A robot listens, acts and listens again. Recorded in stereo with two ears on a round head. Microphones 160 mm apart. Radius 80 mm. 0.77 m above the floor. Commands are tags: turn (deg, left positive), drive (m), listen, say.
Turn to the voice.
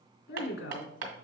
<turn deg="70"/>
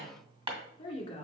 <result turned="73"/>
<turn deg="30"/>
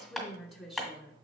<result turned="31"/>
<say>Facing the woman speaking, 1 to 2 m away.</say>